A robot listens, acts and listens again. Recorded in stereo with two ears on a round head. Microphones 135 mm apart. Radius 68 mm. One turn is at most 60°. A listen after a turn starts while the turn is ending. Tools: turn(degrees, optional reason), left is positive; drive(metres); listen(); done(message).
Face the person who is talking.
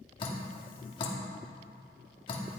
listen()
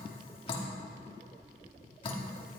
listen()
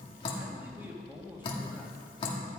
turn(degrees=-30)
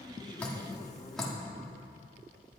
listen()
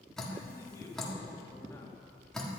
turn(degrees=20, reason="So it is at 20° left.")
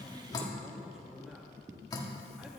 done("Facing the man speaking.")